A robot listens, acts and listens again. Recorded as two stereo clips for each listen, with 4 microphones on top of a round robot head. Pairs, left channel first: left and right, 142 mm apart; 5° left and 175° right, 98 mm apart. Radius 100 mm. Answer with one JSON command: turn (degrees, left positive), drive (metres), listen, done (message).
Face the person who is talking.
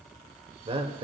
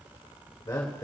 {"turn": -50}
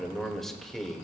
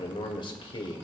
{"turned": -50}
{"done": "Found it: a man speaking, straight ahead, 1 to 2 m away."}